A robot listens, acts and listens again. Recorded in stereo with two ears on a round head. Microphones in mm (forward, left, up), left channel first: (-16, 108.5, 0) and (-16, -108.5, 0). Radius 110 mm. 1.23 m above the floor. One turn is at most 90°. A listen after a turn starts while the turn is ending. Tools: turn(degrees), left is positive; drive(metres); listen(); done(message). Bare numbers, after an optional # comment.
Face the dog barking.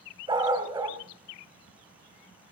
# The dog barking: about 15° right or 165° right.
turn(-15)
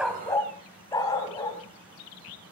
# So it is at 15° left.
turn(15)
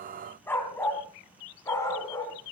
# The dog barking is now 15° left.
turn(15)
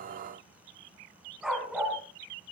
done("Facing the dog barking.")